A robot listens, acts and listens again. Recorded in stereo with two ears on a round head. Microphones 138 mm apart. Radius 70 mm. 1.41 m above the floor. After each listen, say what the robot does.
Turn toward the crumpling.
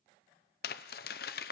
Turn 65° left.
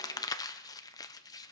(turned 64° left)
Turn 25° left.
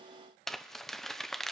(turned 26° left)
Found it: crumpling, straight ahead, under 1 m away.